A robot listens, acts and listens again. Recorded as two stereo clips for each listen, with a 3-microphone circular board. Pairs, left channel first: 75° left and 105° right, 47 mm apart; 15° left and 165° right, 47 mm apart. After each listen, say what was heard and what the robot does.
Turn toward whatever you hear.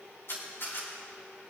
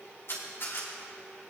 The camera shutter: 45° left. Turn 45° left.
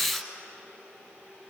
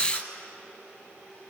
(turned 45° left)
Keep listening.
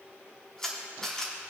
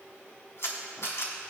Found it: a camera shutter, straight ahead, 2 to 4 m away.